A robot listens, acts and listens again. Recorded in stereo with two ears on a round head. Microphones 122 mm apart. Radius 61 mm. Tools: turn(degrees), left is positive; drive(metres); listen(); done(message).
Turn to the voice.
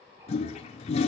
listen()
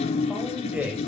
turn(degrees=-30)
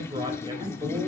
turn(degrees=-135)
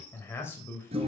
turn(degrees=20)
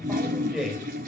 done("Facing the man speaking, 2 to 4 m away.")